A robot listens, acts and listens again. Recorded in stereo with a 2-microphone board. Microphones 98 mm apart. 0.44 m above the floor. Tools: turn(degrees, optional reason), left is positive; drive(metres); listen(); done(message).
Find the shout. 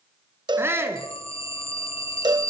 turn(degrees=-25, reason="The shout: about 25° right or 155° right.")
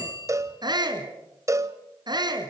turn(degrees=-130, reason="So it is at 130° right.")
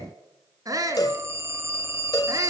turn(degrees=-40, reason="The shout is now 40° right.")
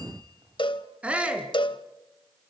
turn(degrees=-15, reason="The shout is now 15° right.")
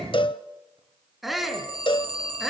done("Facing the shout.")